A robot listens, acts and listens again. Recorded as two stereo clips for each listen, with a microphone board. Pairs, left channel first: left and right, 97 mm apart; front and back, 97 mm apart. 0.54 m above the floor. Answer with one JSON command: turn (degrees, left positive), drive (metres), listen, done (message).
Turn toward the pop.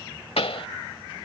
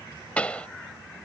{"turn": 80}
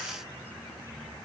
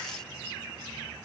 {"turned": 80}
{"done": "Facing where the pop came from. I can't hear it now."}